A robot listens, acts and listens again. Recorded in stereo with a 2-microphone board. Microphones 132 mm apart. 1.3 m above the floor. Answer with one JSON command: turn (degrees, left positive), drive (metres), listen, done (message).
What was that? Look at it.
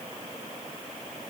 {"listen": true}
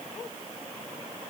{"listen": true}
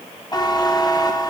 {"turn": 30}
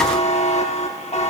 {"turn": 120}
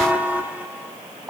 {"turn": -15}
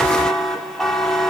{"done": "Found it: a buzzer, straight ahead."}